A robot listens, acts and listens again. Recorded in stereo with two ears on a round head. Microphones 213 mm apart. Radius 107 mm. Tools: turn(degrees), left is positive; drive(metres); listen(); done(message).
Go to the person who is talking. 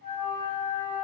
listen()
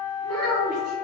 turn(degrees=-70)
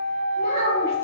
listen()
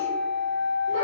listen()
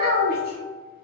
turn(degrees=-40)
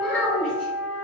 drive(metres=1.0)
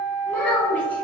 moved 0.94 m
drive(metres=1.0)
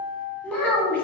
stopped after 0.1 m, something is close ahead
done("Arrived at the child speaking, straight ahead.")